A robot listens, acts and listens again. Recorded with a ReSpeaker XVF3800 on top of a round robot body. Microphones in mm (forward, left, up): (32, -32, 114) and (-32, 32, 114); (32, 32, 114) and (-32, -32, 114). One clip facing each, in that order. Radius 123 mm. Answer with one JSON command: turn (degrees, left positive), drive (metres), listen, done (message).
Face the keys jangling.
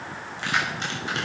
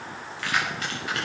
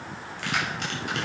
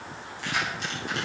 {"turn": 20}
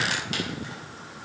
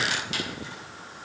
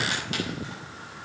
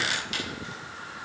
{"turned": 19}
{"listen": true}
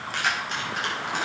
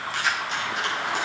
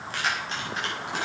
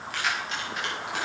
{"turn": -10}
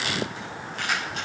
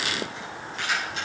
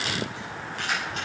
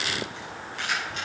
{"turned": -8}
{"done": "Facing the keys jangling, over 4 m away."}